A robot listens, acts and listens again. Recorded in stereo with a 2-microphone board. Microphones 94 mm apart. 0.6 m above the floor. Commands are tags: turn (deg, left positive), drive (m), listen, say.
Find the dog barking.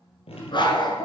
<turn deg="50"/>
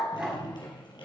<say>Facing the dog barking.</say>